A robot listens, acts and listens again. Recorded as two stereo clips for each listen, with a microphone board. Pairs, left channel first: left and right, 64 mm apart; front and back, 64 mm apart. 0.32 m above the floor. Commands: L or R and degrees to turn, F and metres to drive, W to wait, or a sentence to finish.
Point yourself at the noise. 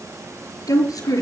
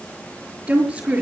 L105
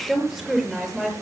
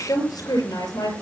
R10
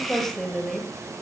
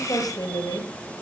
Found it: a woman speaking, straight ahead.